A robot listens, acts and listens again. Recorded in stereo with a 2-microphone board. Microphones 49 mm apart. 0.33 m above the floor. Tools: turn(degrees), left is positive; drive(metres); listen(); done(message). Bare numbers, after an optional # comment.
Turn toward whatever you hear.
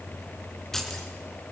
turn(30)
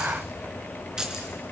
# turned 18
# So it is at 15° right.
turn(-15)
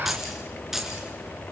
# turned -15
done("Facing the keys jangling, 2 to 4 m away.")